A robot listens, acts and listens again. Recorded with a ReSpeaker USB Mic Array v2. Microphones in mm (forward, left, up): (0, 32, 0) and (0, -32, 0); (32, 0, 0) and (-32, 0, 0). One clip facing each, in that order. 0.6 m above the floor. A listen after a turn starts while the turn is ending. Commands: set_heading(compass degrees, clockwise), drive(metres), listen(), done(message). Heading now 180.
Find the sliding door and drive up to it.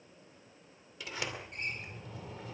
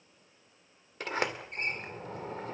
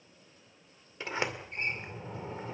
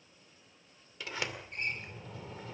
set_heading(235)
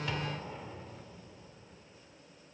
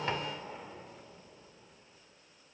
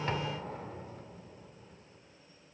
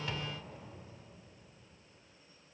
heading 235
drive(1.0)
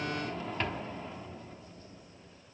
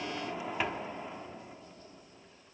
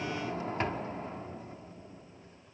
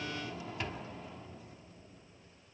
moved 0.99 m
set_heading(250)
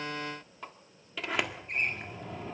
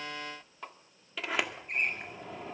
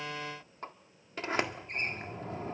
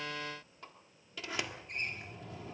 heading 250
drive(1.0)
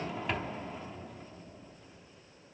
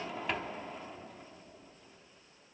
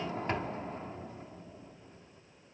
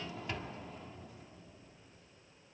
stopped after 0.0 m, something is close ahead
done("I am next to the sliding door.")